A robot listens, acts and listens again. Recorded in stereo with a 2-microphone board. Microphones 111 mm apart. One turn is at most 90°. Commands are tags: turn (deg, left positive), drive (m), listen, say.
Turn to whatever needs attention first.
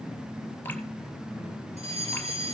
<turn deg="-65"/>
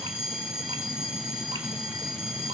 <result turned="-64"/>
<say>Facing the fire alarm.</say>